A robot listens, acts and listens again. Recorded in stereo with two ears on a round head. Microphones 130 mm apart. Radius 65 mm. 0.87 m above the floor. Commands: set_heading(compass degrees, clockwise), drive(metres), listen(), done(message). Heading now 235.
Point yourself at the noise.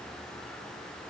listen()
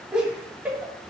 set_heading(265)
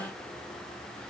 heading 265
listen()
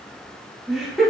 set_heading(295)
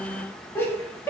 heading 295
set_heading(280)
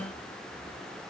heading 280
listen()
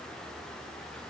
listen()
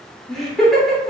done("Facing the laughter.")